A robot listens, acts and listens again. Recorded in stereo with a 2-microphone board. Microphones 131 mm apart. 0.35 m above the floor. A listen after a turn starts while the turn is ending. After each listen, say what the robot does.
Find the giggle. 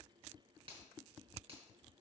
Keep listening.
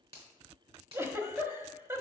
Turn 20° right.
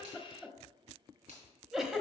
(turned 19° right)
Found it: a giggle, straight ahead, 1 to 2 m away.